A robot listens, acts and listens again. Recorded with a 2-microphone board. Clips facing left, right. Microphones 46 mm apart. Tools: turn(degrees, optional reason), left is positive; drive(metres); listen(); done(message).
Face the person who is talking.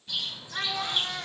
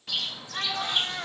turn(degrees=-30)
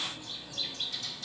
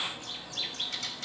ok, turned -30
listen()
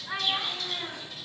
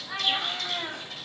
turn(degrees=15, reason="So it is at 15° left.")
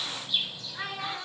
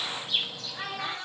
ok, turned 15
done("Facing the child speaking, 2 to 4 m away.")